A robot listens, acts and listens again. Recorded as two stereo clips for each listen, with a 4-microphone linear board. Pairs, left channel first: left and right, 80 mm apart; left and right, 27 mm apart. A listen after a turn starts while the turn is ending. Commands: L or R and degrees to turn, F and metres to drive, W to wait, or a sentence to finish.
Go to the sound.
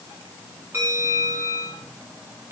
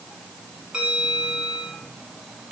R35
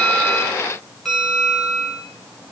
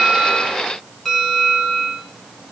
F1.0
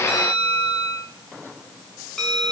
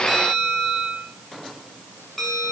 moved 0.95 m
F1.0
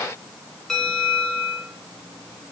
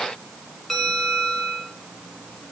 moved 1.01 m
F1.0
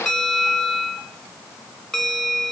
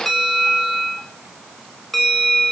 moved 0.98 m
F1.0
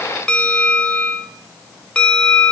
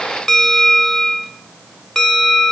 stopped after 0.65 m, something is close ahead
L10
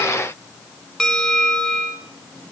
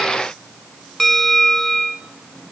I am next to the bell.